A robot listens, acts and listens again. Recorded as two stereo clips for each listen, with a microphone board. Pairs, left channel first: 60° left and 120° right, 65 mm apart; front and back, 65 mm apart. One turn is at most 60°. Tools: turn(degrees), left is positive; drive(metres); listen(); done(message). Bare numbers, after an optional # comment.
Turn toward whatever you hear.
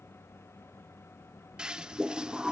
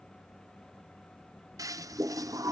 # The toilet flushing: 165° left.
turn(60)
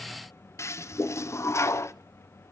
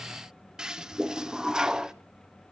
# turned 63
# The toilet flushing is now 100° left.
turn(60)
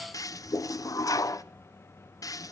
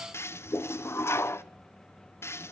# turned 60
# The toilet flushing is now 45° left.
turn(45)
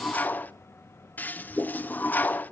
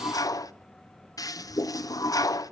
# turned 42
done("Found it: a toilet flushing, straight ahead, under 1 m away.")